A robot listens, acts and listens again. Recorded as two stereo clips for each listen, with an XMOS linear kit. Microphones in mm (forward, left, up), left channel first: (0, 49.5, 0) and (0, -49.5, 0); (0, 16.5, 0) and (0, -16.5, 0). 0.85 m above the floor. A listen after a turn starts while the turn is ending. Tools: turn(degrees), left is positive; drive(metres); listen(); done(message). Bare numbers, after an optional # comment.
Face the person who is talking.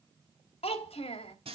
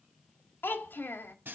# The child speaking: about 70° left or 110° left.
turn(70)
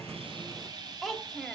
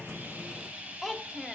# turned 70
done("Facing the child speaking.")